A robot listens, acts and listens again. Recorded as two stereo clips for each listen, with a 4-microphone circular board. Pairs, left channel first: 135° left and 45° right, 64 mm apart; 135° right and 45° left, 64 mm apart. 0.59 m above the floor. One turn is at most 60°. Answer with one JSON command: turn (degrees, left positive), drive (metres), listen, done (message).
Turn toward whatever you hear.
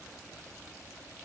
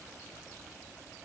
{"listen": true}
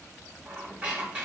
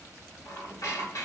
{"turn": -60}
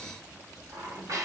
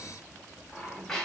{"turn": -50}
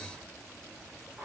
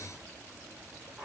{"done": "Found it: a squeak, straight ahead."}